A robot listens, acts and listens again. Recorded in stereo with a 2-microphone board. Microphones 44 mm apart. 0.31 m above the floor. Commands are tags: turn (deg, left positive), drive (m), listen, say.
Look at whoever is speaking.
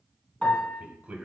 <turn deg="-30"/>
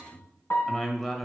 <say>Found it: a man speaking, straight ahead.</say>